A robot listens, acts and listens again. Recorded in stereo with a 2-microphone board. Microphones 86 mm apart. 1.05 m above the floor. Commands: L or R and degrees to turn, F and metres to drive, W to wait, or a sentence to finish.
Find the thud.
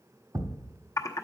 R50
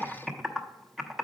W
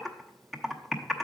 I heard a thud, but can't make it out now. It was about straight ahead or 80° right.